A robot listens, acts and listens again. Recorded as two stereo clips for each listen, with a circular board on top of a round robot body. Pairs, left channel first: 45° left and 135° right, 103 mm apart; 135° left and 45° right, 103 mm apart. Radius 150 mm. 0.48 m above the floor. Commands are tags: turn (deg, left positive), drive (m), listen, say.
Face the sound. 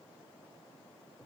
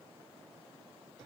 <listen/>
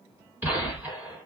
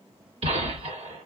<turn deg="-60"/>
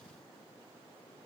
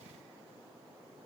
<say>I heard a gunshot from this way, but can't make it out now.</say>